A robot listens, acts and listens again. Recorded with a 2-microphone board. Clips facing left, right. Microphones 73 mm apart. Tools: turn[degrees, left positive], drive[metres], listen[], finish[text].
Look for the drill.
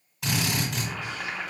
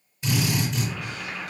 Action: turn[90]
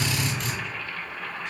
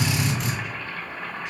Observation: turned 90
Action: finish[Facing the drill, 1 to 2 m away.]